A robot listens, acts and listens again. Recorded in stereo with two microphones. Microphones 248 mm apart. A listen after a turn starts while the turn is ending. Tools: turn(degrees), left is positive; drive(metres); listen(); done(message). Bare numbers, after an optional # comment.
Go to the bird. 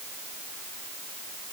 listen()
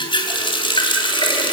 listen()
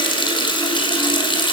done("I can't make out a bird, only a running tap.")